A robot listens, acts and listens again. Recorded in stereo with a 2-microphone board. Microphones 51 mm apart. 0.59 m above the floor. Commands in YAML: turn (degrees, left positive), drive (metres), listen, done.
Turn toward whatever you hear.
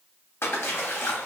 turn: 55
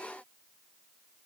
listen: true
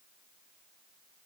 done: "I heard a splash, but can't make it out now. It was about straight ahead or 70° left."